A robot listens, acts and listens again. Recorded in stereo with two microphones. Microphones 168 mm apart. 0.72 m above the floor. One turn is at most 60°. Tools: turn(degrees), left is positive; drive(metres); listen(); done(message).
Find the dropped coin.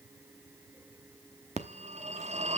listen()
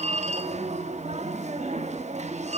listen()
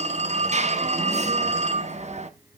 done("I can't make out a dropped coin to turn to.")